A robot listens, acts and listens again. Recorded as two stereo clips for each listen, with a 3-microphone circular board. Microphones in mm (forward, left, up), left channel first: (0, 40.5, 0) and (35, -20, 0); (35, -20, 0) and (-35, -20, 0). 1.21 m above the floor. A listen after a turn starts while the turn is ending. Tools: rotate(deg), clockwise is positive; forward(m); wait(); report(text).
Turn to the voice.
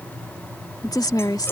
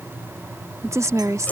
rotate(-140)
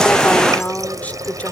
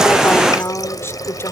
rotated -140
rotate(-55)
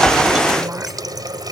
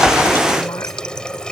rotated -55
wait()
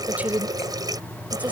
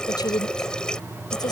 rotate(-10)
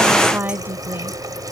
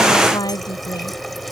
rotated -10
report("Found it: a woman speaking, straight ahead.")